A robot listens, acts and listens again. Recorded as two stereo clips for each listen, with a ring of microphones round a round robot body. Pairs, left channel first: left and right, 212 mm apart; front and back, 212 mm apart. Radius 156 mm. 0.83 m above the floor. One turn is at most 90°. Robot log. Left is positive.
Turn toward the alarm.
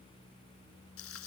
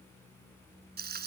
cmd idle
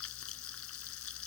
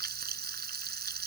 cmd idle
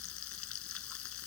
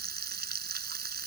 end: I can't make out an alarm to turn to.